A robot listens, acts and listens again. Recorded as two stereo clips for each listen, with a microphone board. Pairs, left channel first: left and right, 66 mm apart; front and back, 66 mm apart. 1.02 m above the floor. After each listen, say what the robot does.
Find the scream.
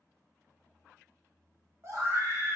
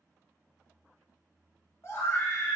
Turn 45° right.
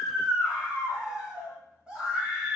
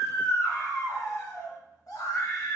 Turn 15° right.
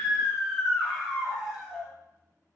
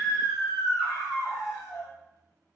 Found it: a scream, straight ahead.